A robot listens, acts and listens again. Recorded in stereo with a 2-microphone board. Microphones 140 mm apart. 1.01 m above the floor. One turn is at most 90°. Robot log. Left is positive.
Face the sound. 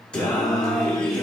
cmd yaw +30
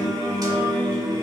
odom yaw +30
note: So it is at 30° right.
cmd yaw -30
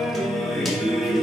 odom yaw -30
end: Facing the singing.